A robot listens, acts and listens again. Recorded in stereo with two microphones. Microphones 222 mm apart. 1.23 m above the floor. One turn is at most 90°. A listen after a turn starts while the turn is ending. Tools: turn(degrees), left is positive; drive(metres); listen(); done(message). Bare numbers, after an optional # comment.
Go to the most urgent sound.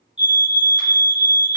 # The fire alarm: about 20° left or 160° left.
turn(20)
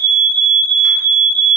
# So it is at 140° left.
turn(90)
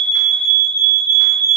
# The fire alarm is now 50° left.
turn(50)
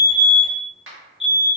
drive(1.0)
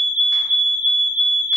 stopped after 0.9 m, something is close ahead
# The fire alarm is now 15° right.
turn(-15)
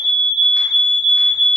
done("I am next to the fire alarm.")